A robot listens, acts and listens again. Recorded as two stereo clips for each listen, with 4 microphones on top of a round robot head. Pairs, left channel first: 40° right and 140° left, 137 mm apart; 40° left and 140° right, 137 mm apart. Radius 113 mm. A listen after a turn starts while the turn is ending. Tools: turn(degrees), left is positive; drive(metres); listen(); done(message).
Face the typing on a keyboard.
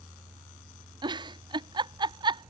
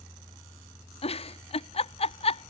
listen()
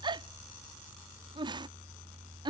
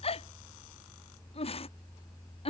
listen()
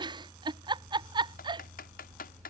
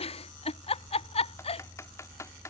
turn(degrees=-30)
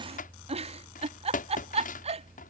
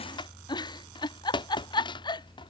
turn(degrees=-15)
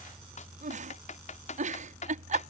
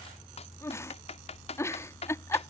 done("Found it: typing on a keyboard, straight ahead.")